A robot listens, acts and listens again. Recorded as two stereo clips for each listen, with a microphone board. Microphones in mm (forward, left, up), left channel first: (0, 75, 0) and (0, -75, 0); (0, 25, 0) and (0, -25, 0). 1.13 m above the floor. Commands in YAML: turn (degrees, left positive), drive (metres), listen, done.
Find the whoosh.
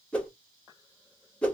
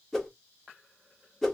turn: 30
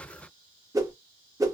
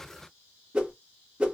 turn: -25
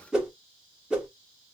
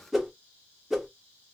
done: "Found it: a whoosh, straight ahead, under 1 m away."